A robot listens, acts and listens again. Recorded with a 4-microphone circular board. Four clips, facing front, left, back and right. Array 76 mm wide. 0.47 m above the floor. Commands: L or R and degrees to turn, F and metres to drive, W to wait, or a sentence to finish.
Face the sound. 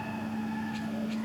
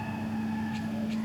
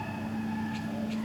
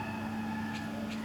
W
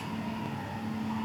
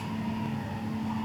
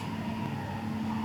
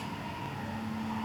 W
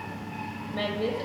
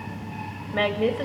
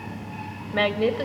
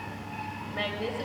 L150
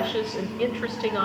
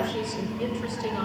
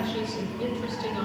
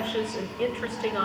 R35
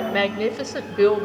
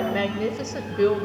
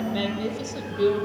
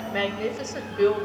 Found it: a woman speaking, straight ahead, 1 to 2 m away.